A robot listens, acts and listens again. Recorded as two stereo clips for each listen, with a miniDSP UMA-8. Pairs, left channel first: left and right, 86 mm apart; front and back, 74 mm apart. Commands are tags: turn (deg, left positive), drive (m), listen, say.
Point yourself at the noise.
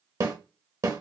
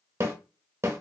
<turn deg="-130"/>
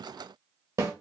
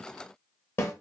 <turn deg="-45"/>
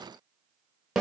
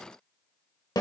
<turn deg="-10"/>
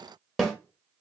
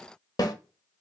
<say>Facing the snare drum, under 1 m away.</say>